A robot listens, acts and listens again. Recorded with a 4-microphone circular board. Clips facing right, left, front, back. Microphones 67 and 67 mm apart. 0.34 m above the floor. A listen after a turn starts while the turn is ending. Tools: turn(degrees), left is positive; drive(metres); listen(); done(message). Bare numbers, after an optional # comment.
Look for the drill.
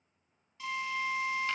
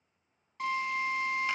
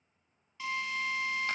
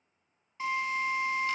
# The drill: 120° left.
turn(120)
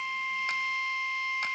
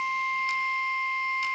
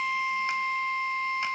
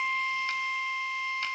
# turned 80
# The drill is now 40° left.
turn(40)
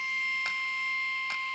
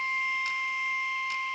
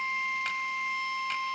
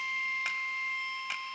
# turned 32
# The drill is now 10° left.
turn(10)
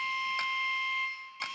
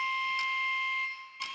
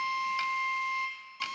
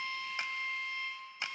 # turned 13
done("Facing the drill.")